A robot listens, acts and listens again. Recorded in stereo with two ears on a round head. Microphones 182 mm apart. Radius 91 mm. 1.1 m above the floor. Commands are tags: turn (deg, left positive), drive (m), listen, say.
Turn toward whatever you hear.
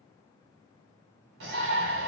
<turn deg="-65"/>
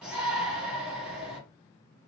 <say>Facing the shout.</say>